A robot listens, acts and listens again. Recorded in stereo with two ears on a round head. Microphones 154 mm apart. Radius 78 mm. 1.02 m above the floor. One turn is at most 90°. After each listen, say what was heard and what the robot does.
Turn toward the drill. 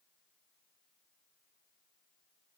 Keep listening.
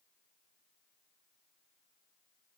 Keep listening.
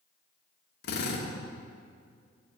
The drill: about 65° left or 115° left. Turn 65° left.
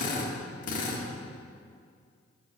So it is at 50° left. Turn 50° left.
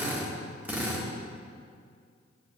The drill is now 10° right. Turn 10° right.
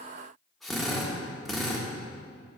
Facing the drill.